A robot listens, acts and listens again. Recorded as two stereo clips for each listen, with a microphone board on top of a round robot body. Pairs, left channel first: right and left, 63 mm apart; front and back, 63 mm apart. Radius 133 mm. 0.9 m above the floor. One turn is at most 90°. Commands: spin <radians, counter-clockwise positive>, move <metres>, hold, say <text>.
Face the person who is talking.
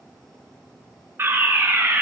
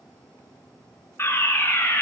hold
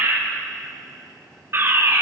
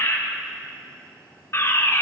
hold
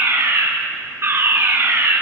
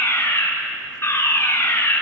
say I can't make out anyone speaking to turn to.